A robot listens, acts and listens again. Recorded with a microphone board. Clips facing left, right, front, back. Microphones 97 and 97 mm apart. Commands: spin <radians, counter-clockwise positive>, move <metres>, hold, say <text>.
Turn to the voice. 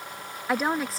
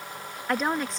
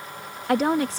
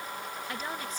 say Facing the woman speaking.